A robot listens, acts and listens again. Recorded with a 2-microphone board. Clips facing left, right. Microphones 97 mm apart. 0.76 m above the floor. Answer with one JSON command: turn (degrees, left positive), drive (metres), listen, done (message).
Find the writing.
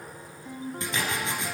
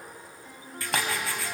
{"turn": 20}
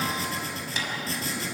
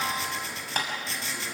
{"turn": 140}
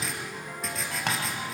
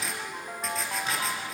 {"done": "Found it: writing, straight ahead."}